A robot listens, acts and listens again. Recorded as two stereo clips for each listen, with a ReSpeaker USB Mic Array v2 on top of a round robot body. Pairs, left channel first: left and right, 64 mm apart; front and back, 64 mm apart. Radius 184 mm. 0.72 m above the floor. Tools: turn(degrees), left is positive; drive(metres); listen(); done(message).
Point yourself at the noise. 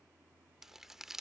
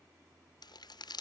done("Facing the crumpling.")